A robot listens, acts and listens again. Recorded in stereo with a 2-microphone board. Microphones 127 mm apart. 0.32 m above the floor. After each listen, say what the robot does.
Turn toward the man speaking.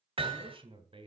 Turn 45° right.
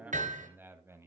Turn 20° right.
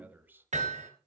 Turn 15° right.
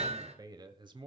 Turn 40° right.
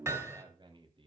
Turn 40° right.
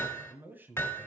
Turn 15° right.
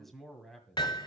Found it: a man speaking, straight ahead.